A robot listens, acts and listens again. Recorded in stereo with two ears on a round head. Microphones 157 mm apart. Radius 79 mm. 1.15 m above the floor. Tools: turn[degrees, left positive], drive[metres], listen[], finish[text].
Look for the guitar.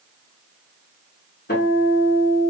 Thought: The guitar: about 55° left or 125° left.
Action: turn[55]
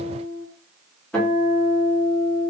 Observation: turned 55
Action: finish[Found it: a guitar, straight ahead.]